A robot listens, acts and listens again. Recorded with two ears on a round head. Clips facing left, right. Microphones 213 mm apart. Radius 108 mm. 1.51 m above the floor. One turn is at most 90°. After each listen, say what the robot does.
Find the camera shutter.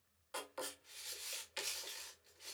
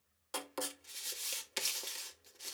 Keep listening.
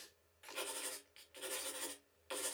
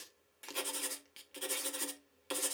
Keep listening.
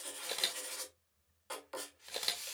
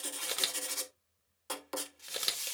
Turn 15° right.
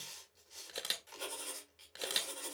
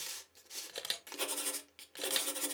Found it: a camera shutter, straight ahead, 1 to 2 m away.